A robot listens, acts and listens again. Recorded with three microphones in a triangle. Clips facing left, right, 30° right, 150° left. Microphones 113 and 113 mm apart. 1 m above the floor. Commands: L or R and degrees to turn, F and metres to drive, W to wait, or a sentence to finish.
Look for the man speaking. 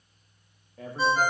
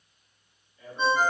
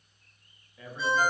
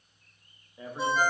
L85
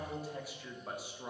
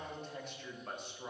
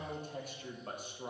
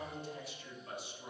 L10
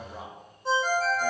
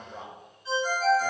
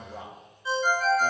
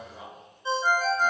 Facing the man speaking.